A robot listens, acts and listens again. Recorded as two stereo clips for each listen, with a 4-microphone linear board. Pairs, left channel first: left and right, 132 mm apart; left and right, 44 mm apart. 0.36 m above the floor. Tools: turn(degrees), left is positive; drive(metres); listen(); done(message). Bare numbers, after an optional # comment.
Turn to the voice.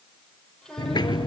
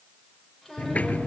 turn(30)
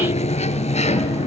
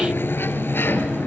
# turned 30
listen()
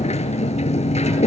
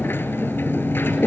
listen()
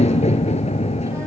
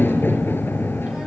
done("I heard a child speaking, but can't make it out now. It was about 25° right or 145° left.")